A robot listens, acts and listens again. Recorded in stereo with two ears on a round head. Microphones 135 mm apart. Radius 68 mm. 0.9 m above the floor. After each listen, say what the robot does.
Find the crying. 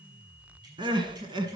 Turn 30° right.
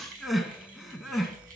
Found it: crying, straight ahead.